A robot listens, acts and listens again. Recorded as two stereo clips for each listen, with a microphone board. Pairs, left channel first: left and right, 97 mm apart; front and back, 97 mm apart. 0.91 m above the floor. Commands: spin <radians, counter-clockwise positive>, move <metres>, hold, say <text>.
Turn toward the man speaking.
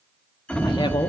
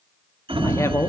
spin 1.05
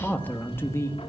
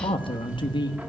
spin 0.52
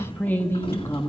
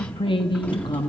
spin 0.61
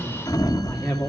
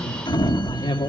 spin 0.35
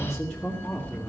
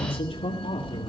say Facing the man speaking.